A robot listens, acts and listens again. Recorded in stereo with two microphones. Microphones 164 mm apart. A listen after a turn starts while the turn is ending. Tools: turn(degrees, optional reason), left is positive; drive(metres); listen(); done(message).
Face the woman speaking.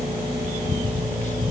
listen()
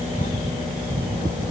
listen()
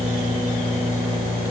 done("I can't make out a woman speaking.")